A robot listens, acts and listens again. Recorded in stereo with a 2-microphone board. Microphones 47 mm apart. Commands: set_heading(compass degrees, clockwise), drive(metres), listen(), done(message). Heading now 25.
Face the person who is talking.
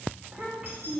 set_heading(55)
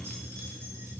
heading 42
listen()
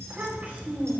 set_heading(192)
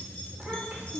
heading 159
set_heading(189)
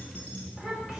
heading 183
set_heading(193)
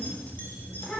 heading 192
done("Found it: a child speaking, straight ahead.")